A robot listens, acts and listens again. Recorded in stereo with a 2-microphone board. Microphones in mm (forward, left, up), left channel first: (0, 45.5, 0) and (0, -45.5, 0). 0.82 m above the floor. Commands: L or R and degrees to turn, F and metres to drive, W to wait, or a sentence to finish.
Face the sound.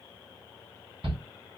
R70
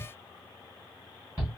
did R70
R30
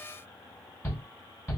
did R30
Found it: a shout, straight ahead.